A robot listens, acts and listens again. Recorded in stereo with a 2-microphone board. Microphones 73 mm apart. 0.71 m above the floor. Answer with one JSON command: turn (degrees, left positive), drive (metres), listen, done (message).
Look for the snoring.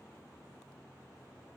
{"listen": true}
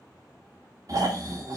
{"turn": -45}
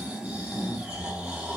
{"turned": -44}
{"turn": -15}
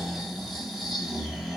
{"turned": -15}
{"done": "Facing the snoring, 2 to 4 m away."}